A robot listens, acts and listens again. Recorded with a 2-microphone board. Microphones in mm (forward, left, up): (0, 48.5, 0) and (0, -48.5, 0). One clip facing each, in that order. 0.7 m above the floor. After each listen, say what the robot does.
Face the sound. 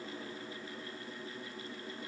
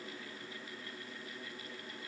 Keep listening.
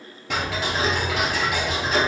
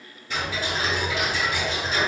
Turn 90° left.
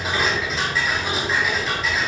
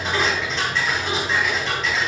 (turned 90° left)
Found it: ticking, straight ahead, 2 to 4 m away.